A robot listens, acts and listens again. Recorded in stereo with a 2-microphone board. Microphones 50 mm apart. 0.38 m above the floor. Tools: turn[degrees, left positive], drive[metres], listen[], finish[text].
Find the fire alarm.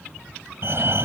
Thought: The fire alarm: about 55° right or 125° right.
Action: turn[-55]
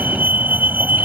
Thought: So it is at 45° right.
Action: turn[-45]
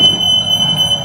Thought: The fire alarm is now 15° right.
Action: turn[-15]
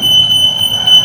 Action: finish[Found it: a fire alarm, straight ahead.]